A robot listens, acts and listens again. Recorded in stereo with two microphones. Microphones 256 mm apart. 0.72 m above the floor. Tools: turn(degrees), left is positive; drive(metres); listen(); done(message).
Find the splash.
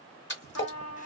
turn(degrees=45)
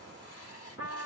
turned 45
listen()
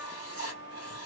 done("I heard a splash, but can't make it out now. It was about straight ahead or 90° left.")